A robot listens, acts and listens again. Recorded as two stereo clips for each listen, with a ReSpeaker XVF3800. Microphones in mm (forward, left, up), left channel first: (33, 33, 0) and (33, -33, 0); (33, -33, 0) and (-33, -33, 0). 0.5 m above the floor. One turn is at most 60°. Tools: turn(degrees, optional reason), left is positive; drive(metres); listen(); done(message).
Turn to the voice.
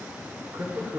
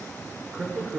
turn(degrees=-60, reason="The woman speaking: 105° right.")
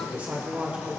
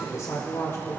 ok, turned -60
turn(degrees=-25, reason="The woman speaking is now 25° right.")
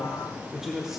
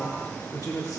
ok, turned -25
turn(degrees=-10, reason="The woman speaking is now 10° right.")
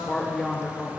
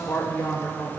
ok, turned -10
done("Found it: a woman speaking, straight ahead.")